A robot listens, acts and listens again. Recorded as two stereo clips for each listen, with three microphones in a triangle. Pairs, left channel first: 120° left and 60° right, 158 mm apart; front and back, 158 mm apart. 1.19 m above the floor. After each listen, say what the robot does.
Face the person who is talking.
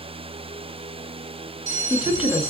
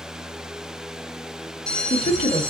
Turn 25° left.
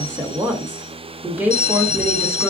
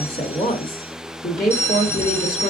Turn 15° left.
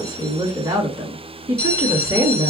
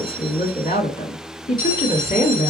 Found it: a woman speaking, straight ahead, 1 to 2 m away.